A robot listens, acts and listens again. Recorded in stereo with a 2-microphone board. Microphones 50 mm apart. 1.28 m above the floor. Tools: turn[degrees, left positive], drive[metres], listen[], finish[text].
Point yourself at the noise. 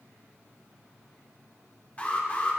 Thought: The alarm: about 25° left or 155° left.
Action: turn[25]
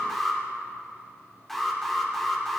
Action: finish[Facing the alarm, 1 to 2 m away.]